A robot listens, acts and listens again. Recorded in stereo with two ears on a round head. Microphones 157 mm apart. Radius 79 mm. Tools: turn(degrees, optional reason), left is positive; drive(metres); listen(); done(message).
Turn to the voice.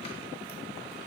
listen()
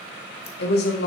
turn(degrees=65, reason="The woman speaking: about 65° left or 115° left.")
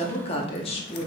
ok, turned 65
turn(degrees=35, reason="So it is at 35° left.")
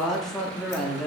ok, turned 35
done("Found it: a woman speaking, straight ahead, under 1 m away.")